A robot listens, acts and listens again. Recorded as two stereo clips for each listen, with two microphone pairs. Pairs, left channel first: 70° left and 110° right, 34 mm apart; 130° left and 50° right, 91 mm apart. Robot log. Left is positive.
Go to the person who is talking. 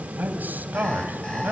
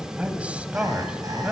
note: The man speaking: 125° right.
cmd yaw -125
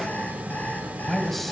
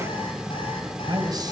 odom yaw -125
note: The man speaking is now 15° right.
cmd yaw -15
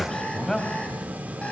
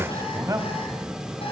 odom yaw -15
cmd fwd 1.0
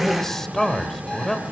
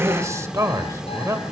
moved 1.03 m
cmd fwd 1.0
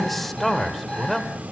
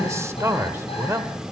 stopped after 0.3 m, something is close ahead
note: The man speaking is now 10° right.
cmd yaw -10
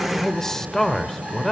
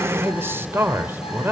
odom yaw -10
end: I am next to the man speaking.